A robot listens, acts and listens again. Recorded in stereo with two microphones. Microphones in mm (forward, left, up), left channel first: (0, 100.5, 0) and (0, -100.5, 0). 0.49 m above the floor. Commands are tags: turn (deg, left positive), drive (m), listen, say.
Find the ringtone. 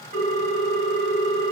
<turn deg="70"/>
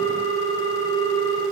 <turn deg="20"/>
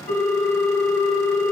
<say>Found it: a ringtone, straight ahead.</say>